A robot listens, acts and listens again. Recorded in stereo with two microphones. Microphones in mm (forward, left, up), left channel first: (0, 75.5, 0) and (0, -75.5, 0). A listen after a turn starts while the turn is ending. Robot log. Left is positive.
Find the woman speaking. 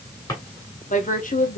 note: The woman speaking: about 65° left or 115° left.
cmd yaw +65
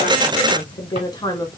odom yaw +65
note: So it is at 20° left.
cmd yaw +20
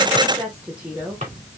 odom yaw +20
note: The woman speaking is now 10° right.
cmd yaw -10
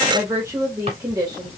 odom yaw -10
note: The woman speaking is now 25° right.
cmd yaw -25
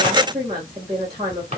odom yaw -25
note: The woman speaking is now 30° right.
cmd yaw -30
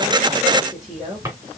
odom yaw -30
end: Facing the woman speaking.